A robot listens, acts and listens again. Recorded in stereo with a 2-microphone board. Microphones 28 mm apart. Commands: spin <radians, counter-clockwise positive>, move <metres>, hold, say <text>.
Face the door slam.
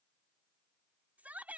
hold
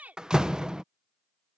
spin -0.52
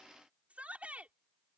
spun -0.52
hold
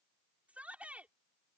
say I heard a door slam, but can't make it out now. It was about straight ahead or 120° right.